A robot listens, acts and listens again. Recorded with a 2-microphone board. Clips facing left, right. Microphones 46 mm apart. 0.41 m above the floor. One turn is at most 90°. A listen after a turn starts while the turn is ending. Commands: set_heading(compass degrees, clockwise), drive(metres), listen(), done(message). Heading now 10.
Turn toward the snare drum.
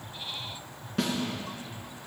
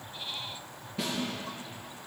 set_heading(280)
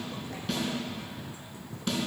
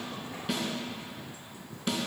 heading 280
set_heading(290)
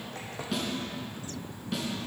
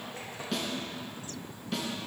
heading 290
done("Facing the snare drum, 2 to 4 m away.")